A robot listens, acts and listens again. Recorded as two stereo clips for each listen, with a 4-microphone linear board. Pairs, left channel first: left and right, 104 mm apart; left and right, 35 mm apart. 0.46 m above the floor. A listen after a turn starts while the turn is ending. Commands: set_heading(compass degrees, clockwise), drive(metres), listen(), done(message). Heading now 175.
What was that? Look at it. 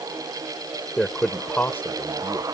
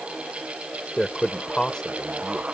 set_heading(155)
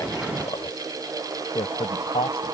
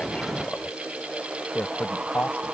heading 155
set_heading(45)
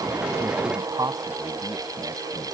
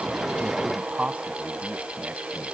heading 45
set_heading(80)
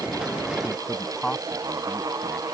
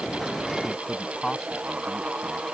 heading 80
done("Found it: a man speaking, straight ahead.")